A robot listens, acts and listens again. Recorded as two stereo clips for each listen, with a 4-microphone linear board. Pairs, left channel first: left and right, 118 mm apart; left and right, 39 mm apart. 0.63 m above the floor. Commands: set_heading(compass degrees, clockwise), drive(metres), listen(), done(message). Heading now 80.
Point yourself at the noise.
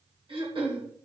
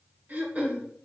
set_heading(125)
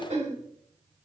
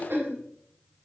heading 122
set_heading(212)
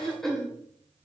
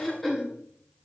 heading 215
done("Facing the throat clearing.")